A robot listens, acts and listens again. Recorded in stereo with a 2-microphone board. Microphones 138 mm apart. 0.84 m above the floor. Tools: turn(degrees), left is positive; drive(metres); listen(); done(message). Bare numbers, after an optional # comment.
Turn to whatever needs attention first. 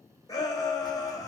# The shout: about 25° left or 155° left.
turn(25)
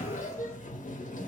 listen()
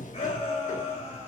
# So it is at 125° left.
turn(125)
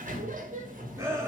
# The shout is now 20° right.
turn(-20)
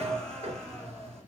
listen()
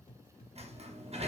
listen()
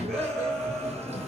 done("Found it: a shout, straight ahead, 1 to 2 m away.")